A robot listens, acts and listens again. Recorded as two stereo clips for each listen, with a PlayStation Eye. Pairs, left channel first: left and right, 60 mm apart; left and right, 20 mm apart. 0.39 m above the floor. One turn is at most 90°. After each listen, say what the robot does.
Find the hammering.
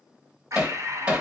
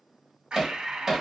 Turn 20° right.
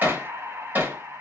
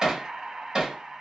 Turn 90° right.
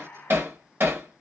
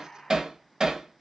Turn 55° right.
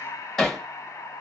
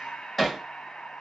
Found it: hammering, straight ahead, 1 to 2 m away.